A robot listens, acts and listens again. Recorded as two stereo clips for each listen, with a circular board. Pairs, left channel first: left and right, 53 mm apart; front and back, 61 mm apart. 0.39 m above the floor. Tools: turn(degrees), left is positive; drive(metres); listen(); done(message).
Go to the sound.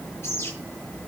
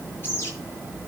turn(degrees=50)
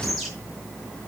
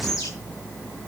drive(metres=1.0)
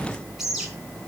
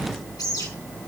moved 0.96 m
turn(degrees=-10)
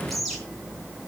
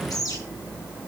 drive(metres=1.0)
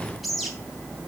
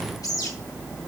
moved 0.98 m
drive(metres=1.0)
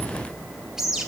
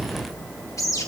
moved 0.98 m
turn(degrees=-10)
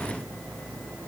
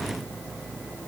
listen()
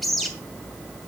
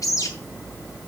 drive(metres=1.0)
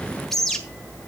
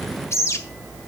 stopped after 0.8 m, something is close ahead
turn(degrees=10)
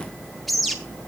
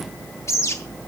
done("Arrived at the bird, straight ahead.")